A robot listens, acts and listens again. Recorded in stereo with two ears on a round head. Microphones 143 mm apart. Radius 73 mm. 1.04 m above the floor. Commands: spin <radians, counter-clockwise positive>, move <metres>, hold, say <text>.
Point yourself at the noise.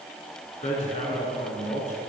spin 0.79
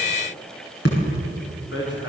spin 1.48
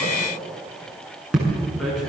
say Found it: hammering, straight ahead.